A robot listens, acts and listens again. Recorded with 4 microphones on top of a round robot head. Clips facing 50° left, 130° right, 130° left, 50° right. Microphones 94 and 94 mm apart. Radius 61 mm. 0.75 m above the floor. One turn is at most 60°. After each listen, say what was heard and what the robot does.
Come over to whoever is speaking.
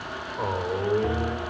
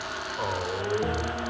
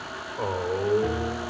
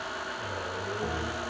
The man speaking: 125° left. Turn 60° left.
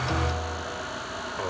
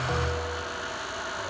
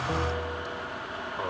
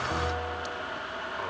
The man speaking is now 65° left. Turn 60° left.
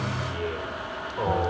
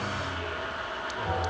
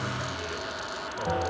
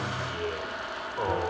Drive 1.0 m forward.
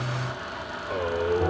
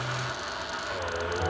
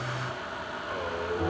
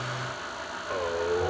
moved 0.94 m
The man speaking is now 10° left. Turn 10° left.
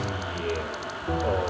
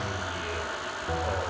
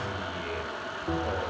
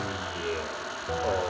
Drive 1.0 m forward.
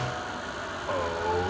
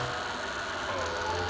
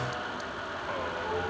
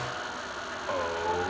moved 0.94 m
Drive 1.0 m forward.
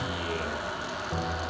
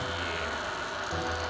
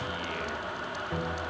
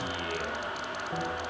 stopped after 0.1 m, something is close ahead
Keep listening.
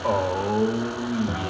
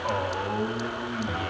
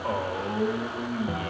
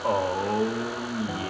Arrived at the man speaking, straight ahead.